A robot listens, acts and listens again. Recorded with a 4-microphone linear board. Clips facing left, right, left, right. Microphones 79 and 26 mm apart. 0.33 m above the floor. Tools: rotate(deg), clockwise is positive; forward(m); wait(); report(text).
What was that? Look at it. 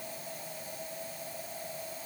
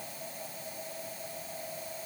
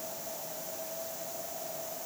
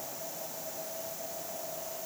wait()
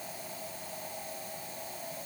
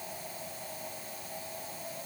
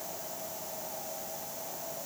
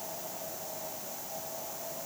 wait()
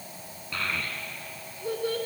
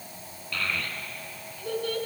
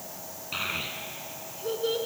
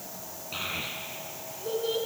rotate(-20)
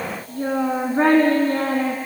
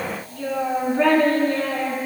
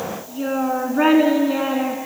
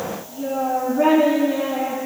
rotate(-140)
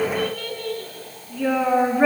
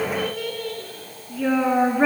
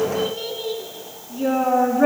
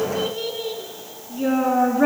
report("Facing the child speaking.")